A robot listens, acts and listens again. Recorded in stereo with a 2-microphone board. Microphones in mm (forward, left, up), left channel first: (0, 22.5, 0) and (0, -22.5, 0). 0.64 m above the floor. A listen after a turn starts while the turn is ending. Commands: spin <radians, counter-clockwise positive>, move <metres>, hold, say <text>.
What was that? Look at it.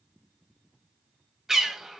spin -0.52
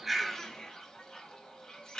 spin 0.35
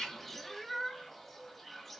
say Facing the bird, under 1 m away.